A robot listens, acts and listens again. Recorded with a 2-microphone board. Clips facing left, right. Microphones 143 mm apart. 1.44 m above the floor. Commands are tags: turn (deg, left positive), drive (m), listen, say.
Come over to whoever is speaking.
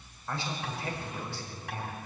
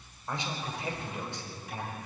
<turn deg="-20"/>
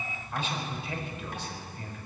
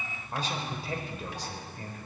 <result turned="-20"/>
<turn deg="-140"/>
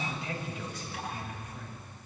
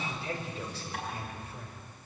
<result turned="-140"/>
<turn deg="-35"/>
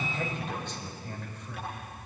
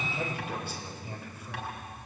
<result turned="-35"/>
<turn deg="-10"/>
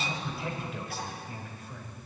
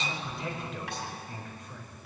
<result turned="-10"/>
<drive m="1.0"/>
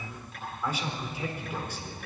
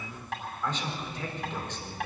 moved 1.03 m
<turn deg="10"/>
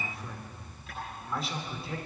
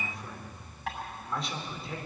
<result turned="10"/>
<drive m="1.0"/>
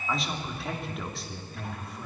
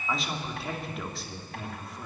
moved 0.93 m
<drive m="1.0"/>
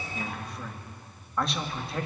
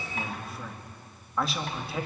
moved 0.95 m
<drive m="1.0"/>
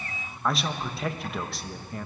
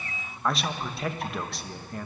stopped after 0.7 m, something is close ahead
<say>I am next to the man speaking.</say>